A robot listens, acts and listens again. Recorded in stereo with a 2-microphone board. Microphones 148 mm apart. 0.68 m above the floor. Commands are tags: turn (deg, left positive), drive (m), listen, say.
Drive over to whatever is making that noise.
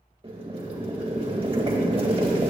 <turn deg="-40"/>
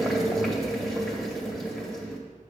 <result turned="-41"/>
<drive m="1.0"/>
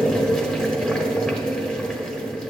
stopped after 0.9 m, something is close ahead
<say>I am next to the boiling.</say>